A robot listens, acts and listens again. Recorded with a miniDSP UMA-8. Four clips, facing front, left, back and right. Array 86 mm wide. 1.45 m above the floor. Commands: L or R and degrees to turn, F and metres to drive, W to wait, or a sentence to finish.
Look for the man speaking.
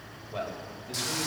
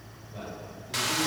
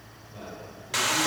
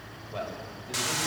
R50
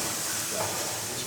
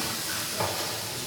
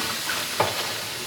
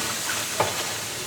W
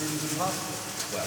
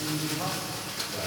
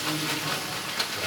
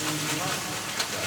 W
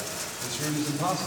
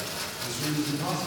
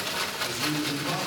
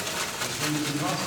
R20
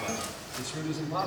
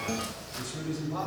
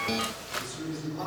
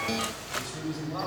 Found it: a man speaking, straight ahead, over 4 m away.